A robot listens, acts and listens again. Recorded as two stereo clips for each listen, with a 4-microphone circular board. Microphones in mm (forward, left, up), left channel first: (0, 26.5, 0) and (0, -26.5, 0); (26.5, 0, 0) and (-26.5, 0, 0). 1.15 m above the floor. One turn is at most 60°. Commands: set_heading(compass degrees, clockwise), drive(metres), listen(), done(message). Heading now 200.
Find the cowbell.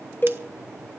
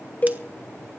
set_heading(145)
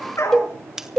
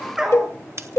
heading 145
set_heading(135)
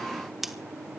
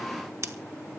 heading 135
listen()
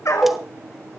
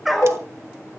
done("Found it: a cowbell, straight ahead, under 1 m away.")